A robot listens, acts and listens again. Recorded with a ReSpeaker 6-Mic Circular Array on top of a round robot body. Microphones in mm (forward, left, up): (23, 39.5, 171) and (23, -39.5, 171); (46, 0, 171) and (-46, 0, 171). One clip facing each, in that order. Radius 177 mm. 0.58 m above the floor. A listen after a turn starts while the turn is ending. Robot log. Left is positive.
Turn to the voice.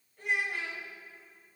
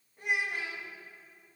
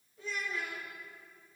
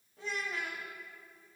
note: The child speaking: 160° right.
cmd yaw -160
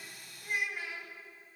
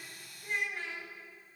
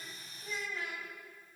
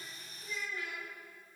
note: The child speaking is now 10° left.
cmd yaw +10
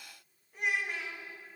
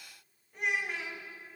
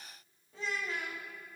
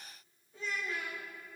end: Found it: a child speaking, straight ahead, 2 to 4 m away.